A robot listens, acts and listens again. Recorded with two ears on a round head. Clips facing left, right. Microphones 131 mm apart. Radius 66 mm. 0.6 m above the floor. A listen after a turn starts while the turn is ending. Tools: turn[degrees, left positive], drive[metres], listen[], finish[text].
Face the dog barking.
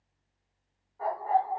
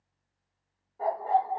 Thought: The dog barking: about 35° right or 145° right.
Action: turn[-35]
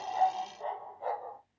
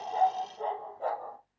Thought: So it is at 110° right.
Action: turn[-110]
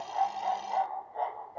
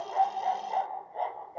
Thought: The dog barking is now 20° right.
Action: turn[-20]
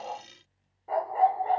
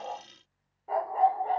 Action: finish[Facing the dog barking.]